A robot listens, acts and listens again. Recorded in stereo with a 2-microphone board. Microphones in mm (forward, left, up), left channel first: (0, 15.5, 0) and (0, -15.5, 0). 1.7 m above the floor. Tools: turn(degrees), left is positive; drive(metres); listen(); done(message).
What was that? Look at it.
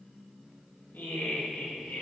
turn(degrees=90)
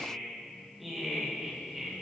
turn(degrees=-10)
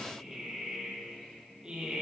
turn(degrees=-25)
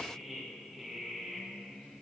done("Facing the laughter, 2 to 4 m away.")